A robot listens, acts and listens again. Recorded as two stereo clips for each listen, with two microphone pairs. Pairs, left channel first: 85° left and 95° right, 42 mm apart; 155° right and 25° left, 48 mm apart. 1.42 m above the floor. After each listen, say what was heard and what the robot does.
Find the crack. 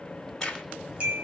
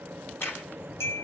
The crack: 165° left. Turn 165° left.
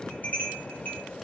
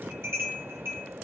Facing where the crack came from. I can't hear it now.